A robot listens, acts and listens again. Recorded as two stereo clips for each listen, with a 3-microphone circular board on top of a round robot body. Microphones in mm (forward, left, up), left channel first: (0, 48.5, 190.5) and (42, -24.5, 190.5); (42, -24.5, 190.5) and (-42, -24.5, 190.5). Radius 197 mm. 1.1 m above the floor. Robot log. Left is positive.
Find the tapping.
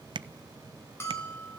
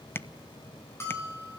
note: The tapping: 60° right.
cmd yaw -60
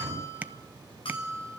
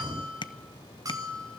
note: The tapping is now 10° left.
cmd yaw +10
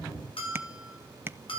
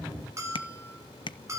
end: Found it: tapping, straight ahead.